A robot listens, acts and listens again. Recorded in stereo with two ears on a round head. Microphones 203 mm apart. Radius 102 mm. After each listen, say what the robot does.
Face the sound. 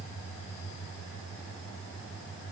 Keep listening.
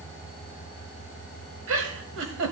Turn 60° right.
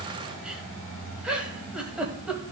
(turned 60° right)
Facing the giggle.